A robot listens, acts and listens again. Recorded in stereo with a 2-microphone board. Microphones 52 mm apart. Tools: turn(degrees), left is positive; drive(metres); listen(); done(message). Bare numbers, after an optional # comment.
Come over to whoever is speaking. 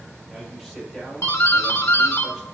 turn(-30)
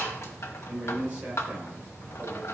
# So it is at 140° right.
turn(-140)
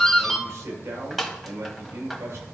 # The man speaking is now 65° right.
turn(-65)
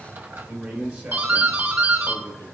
# The man speaking is now 15° right.
turn(-15)
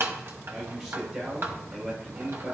# The man speaking is now 10° right.
turn(-10)
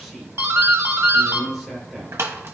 drive(1.0)
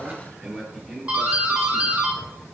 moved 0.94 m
drive(1.0)
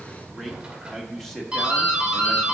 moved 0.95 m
drive(1.0)
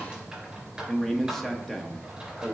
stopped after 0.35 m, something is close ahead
done("Arrived at the man speaking, straight ahead.")